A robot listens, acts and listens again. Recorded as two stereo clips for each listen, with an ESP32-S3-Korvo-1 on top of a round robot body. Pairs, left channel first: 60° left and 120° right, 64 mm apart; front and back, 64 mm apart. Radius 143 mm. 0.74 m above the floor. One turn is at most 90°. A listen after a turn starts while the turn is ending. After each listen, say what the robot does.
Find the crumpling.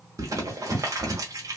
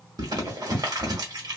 Turn 90° right.
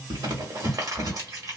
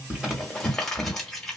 Turn 85° right.
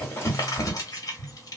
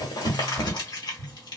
Turn 20° left.
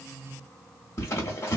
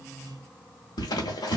Found it: crumpling, straight ahead, under 1 m away.